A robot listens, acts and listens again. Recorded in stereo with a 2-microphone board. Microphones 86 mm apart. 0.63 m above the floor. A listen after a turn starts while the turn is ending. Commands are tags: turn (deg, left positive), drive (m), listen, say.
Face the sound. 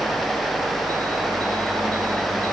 <listen/>
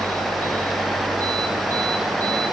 <listen/>
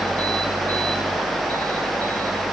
<say>I can't make out anything.</say>